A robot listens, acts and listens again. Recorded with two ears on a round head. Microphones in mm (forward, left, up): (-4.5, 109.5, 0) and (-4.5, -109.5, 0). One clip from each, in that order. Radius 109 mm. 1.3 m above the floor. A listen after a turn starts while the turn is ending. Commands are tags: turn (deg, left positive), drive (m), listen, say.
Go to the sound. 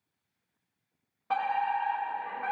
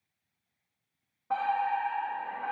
<turn deg="70"/>
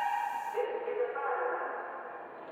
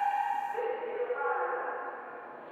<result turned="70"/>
<turn deg="25"/>
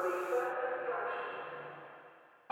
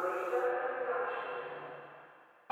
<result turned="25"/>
<drive m="1.0"/>
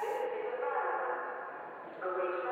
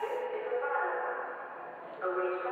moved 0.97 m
<turn deg="-10"/>
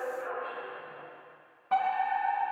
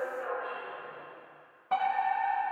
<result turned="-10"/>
<drive m="1.0"/>
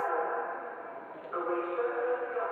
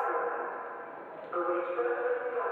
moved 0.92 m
<drive m="1.0"/>
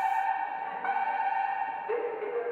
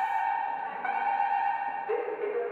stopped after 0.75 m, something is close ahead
<say>Arrived at the fire alarm, straight ahead.</say>